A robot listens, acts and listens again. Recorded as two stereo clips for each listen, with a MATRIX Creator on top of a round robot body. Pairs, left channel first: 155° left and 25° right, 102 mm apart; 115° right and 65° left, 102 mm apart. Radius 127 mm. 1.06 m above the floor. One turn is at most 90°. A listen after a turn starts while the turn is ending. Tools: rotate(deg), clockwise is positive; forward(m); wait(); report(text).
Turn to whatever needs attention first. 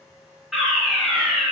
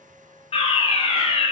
rotate(90)
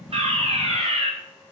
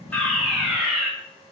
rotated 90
rotate(15)
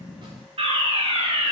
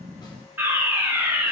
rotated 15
report("Facing the fire alarm, over 4 m away.")